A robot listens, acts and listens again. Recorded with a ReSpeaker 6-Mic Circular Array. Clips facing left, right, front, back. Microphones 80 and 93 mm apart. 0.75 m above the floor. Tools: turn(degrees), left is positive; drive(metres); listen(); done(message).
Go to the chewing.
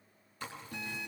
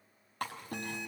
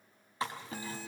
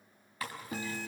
turn(degrees=-65)
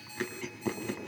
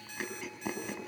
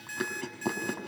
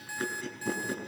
drive(metres=1.0)
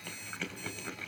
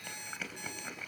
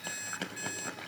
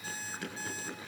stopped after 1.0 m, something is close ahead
done("Blocked. The chewing is further on, straight ahead.")